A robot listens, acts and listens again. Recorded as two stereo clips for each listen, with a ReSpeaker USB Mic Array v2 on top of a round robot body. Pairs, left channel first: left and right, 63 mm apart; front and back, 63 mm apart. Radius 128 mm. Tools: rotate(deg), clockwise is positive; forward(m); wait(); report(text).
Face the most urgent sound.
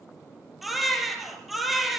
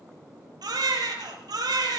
rotate(-180)
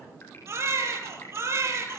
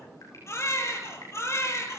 rotate(45)
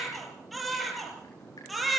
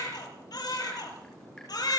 report("Facing the baby crying, over 4 m away.")